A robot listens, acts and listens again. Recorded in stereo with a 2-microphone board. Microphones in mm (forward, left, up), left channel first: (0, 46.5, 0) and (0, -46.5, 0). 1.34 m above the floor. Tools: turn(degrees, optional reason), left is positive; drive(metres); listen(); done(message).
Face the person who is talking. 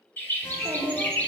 turn(degrees=-40, reason="The child speaking: about 40° right or 140° right.")
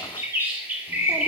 listen()
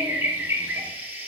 listen()
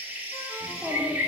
done("Found it: a child speaking, straight ahead.")